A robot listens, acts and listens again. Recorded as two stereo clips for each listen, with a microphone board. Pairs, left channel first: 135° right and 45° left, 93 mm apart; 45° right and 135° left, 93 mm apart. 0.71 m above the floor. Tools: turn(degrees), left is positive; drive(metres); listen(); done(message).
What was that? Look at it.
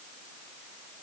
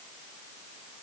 listen()
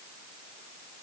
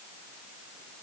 listen()
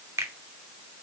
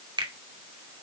turn(degrees=105)
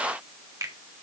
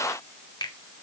done("Found it: a finger snap, straight ahead.")